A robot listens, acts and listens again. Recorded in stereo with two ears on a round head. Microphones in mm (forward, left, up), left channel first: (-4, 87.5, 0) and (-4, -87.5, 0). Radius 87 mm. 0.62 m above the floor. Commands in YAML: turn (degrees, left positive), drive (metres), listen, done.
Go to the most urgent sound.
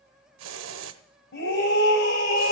turn: 60
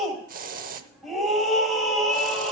drive: 1.0
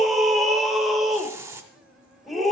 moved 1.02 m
drive: 1.0
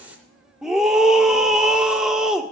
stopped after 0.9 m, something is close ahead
done: "Arrived at the scream, straight ahead."